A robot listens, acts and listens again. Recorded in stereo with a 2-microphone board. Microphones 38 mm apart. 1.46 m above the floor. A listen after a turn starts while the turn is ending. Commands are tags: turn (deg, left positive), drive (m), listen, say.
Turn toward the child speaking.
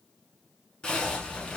<turn deg="30"/>
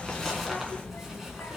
<turn deg="105"/>
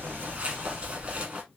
<turn deg="-70"/>
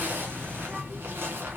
<turn deg="-25"/>
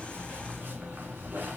<say>Facing the child speaking.</say>